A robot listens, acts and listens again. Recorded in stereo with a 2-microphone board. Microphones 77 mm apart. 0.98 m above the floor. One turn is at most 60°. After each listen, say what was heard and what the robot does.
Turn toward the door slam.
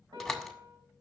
Turn 30° left.
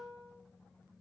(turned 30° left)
Keep listening.
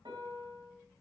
I heard a door slam, but can't make it out now. It was about 25° right or 145° left.